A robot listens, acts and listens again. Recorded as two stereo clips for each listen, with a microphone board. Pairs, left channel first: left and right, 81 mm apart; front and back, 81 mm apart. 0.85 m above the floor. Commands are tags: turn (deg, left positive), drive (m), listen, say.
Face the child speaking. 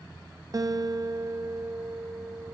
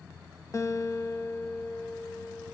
<listen/>
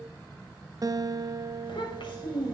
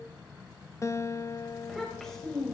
<turn deg="85"/>
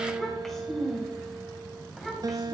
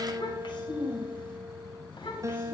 <say>Found it: a child speaking, straight ahead.</say>